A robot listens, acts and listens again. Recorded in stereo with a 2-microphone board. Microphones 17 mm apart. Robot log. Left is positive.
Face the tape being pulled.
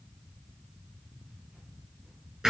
cmd idle
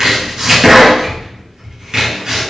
cmd idle
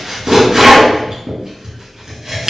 end: I can't make out tape being pulled, only chopping.